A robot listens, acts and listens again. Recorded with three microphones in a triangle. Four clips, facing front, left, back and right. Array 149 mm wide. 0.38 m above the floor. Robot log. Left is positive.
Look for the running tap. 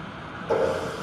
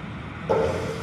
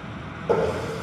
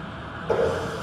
note: The running tap: 165° left.
cmd yaw +165
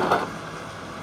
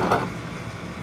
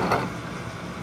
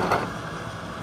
cmd idle
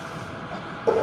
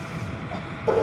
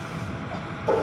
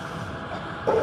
note: The running tap is now 25° right.
cmd yaw -25
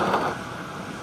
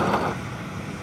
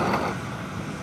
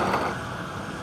cmd idle
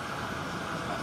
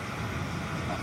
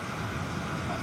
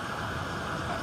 cmd idle
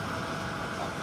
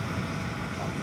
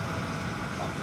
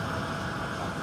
end: I heard a running tap from this way, but can't make it out now.